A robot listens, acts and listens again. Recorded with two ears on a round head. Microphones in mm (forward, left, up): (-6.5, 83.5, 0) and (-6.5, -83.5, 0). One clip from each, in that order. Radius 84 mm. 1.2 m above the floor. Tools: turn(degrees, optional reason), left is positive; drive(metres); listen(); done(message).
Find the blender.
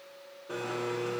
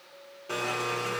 turn(degrees=-60, reason="The blender: about 60° right or 120° right.")
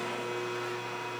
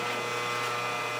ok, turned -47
turn(degrees=-70, reason="So it is at 70° right.")
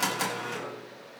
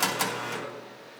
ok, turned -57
turn(degrees=-10, reason="The blender is now 10° right.")
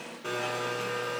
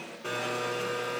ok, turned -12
done("Found it: a blender, straight ahead.")